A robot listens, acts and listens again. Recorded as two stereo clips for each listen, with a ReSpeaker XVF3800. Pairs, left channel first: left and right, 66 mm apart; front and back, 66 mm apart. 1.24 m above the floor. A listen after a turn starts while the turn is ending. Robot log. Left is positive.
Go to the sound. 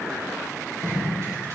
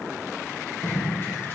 note: The tape being pulled: 55° right.
cmd yaw -55
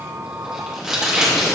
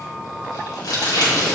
note: The tape being pulled is now 10° right.
cmd yaw -10
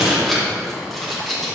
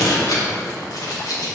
cmd fwd 1.0
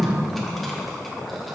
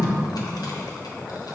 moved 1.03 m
cmd fwd 1.0
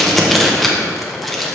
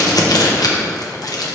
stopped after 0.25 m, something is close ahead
end: I am next to the tape being pulled.